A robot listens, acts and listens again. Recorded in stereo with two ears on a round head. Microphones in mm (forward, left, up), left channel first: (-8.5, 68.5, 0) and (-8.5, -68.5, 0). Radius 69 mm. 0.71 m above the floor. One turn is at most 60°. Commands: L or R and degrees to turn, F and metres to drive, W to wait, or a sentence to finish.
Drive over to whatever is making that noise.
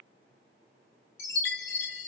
L60
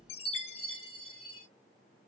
L35
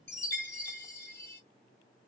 L15
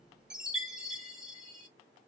F1.0
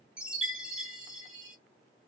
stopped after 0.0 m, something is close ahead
Something is in my way. I am facing the chime but have not reached it.